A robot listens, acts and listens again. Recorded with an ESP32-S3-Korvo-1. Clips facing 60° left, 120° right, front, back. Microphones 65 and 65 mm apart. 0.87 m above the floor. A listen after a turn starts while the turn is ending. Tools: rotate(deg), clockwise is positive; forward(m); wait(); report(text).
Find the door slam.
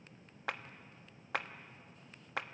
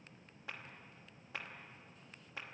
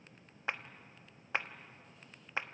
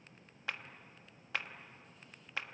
wait()
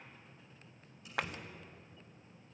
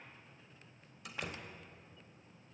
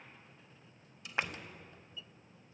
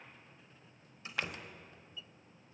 rotate(120)
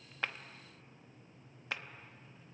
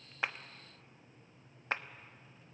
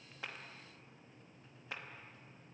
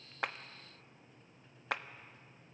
report("Facing where the door slam came from. I can't hear it now.")